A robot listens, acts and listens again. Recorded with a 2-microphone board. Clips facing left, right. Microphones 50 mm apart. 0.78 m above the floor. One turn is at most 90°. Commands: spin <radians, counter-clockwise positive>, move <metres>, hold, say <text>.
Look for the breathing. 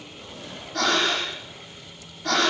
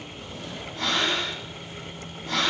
spin 1.57
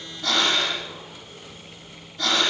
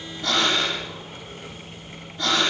spin -0.26
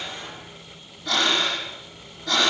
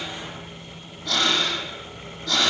say Found it: breathing, straight ahead.